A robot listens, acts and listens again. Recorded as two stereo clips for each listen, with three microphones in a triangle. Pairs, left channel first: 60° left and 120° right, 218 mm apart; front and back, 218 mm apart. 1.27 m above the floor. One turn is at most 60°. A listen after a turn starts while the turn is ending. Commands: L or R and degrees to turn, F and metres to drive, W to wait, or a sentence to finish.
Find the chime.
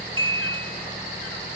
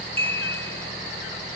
R60
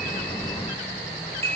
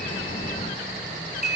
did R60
R60
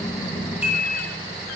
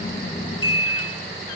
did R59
Found it: a chime, straight ahead.